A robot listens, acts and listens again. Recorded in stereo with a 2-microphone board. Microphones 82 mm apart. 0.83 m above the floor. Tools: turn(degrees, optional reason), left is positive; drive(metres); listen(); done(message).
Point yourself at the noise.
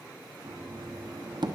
turn(degrees=-65, reason="The knocking: about 65° right or 115° right.")
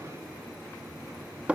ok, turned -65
turn(degrees=-15, reason="So it is at 15° right.")
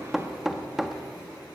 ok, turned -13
done("Facing the knocking.")